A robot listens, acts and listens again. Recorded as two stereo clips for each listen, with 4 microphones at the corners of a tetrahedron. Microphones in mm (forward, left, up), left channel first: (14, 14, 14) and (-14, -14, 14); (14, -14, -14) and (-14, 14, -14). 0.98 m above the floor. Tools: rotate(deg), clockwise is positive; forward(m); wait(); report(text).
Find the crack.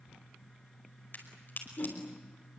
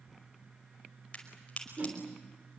rotate(-15)
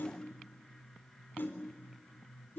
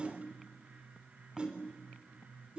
report("Facing where the crack came from. I can't hear it now.")